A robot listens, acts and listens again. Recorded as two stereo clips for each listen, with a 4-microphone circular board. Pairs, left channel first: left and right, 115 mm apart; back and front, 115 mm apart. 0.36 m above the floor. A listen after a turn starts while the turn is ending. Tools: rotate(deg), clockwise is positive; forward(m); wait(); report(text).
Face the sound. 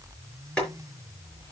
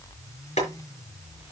rotate(-170)
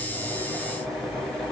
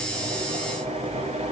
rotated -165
report("Found it: boiling, straight ahead.")